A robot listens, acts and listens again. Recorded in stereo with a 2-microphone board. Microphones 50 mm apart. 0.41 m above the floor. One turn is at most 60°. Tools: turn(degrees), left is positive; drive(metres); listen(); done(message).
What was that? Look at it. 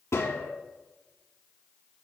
turn(degrees=60)
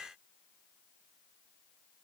listen()
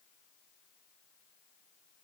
done("I heard a gunshot, but can't make it out now. It was about 5° left or 55° left.")